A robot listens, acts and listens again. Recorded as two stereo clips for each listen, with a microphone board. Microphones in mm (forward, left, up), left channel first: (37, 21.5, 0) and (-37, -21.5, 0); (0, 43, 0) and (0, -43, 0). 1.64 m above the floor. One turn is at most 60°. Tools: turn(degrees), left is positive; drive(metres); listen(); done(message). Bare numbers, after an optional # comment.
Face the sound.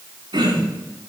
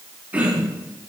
# The throat clearing: 160° right.
turn(-60)
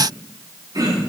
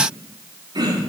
# The throat clearing is now 115° right.
turn(-60)
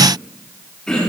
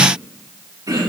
# The throat clearing is now 50° right.
turn(-50)
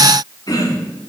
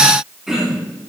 done("Found it: throat clearing, straight ahead, over 4 m away.")